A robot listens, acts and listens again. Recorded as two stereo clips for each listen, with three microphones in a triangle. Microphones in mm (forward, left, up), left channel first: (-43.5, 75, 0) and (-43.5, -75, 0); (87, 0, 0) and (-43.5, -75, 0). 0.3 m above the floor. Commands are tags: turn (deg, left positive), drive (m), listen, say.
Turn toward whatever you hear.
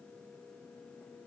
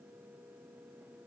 <listen/>
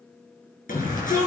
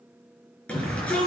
<turn deg="110"/>
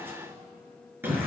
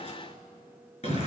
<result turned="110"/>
<turn deg="-15"/>
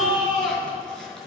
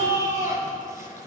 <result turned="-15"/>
<say>Facing the shout, over 4 m away.</say>